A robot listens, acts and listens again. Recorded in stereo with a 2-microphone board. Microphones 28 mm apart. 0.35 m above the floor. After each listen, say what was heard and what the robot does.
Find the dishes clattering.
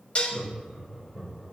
The dishes clattering: about 45° left or 135° left. Turn 45° left.
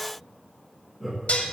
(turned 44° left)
So it is at 85° left. Turn 85° left.
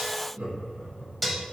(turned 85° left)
Facing the dishes clattering.